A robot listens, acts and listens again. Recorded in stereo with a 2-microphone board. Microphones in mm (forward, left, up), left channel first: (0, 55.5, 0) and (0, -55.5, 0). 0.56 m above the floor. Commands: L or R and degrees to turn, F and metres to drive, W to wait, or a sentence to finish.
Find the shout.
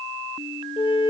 W
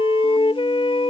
W
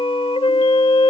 I can't make out a shout to turn to.